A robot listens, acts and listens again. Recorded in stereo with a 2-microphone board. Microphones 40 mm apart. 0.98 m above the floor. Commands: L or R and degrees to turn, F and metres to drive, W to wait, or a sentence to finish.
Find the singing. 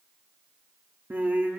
R60
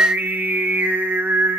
R65
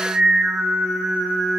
R20
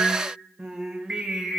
R15
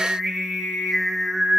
Found it: singing, straight ahead, over 4 m away.